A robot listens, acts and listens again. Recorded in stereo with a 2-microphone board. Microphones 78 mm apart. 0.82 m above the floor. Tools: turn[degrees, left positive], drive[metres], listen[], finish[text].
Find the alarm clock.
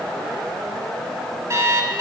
Thought: The alarm clock: about 40° right or 140° right.
Action: turn[-40]
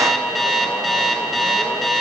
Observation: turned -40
Action: finish[Found it: an alarm clock, straight ahead.]